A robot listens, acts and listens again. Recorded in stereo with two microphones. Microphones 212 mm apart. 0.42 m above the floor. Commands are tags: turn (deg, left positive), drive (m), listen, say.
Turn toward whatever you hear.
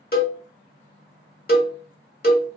<turn deg="45"/>
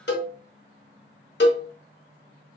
<turn deg="80"/>
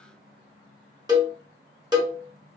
<turn deg="-20"/>
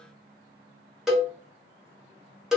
<say>Facing the cowbell, under 1 m away.</say>